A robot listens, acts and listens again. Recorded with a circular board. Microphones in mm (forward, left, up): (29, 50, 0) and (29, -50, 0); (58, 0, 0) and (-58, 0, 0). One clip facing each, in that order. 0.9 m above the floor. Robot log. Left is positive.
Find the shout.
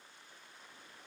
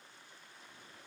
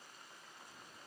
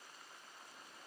cmd idle
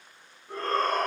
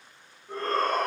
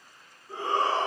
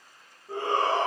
note: The shout: straight behind.
cmd yaw +180
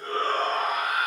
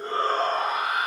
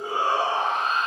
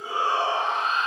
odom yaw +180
note: The shout is now 30° right.
cmd yaw -30
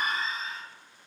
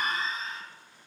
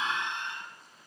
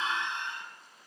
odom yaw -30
end: Found it: a shout, straight ahead.